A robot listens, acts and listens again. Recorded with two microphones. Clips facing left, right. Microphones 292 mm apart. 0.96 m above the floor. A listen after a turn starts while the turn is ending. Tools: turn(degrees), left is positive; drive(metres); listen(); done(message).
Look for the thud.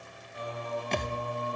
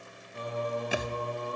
turn(degrees=-30)
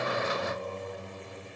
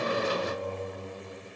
listen()
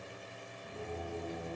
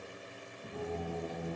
done("I heard a thud, but can't make it out now. It was about 20° left or 140° right.")